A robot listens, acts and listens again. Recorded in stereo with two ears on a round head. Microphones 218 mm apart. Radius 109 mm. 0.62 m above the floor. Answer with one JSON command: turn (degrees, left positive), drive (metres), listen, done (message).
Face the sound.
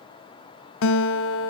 {"turn": 60}
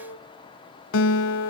{"turn": 55}
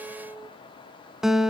{"done": "Found it: a guitar, straight ahead."}